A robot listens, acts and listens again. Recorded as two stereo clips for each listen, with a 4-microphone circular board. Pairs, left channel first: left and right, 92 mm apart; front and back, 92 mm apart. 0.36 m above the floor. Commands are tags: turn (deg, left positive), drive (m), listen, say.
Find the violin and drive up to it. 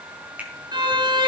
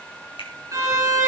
<turn deg="-125"/>
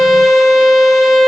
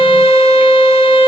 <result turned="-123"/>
<drive m="1.0"/>
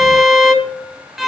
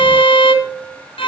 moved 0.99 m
<drive m="1.0"/>
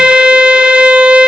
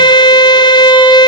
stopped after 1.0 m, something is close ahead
<turn deg="-15"/>
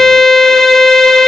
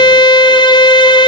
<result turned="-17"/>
<say>Arrived at the violin, straight ahead.</say>